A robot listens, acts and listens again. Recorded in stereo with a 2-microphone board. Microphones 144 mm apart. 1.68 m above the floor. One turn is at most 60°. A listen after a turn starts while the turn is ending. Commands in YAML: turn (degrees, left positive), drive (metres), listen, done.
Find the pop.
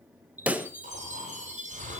turn: -30
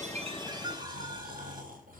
listen: true
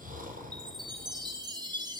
done: "I heard a pop, but can't make it out now. It was about 20° left or 140° right."